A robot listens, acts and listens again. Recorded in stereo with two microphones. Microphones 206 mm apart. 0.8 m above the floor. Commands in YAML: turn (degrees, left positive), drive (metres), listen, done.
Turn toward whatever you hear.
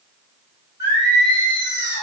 turn: 60
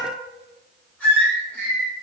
done: "Found it: singing, straight ahead."